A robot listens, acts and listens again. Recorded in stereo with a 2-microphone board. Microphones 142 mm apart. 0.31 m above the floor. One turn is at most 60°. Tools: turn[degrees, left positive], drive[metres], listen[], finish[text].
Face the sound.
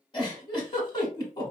Thought: The giggle: about 35° left or 145° left.
Action: turn[35]
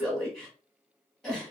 Action: finish[Found it: a giggle, straight ahead, 1 to 2 m away.]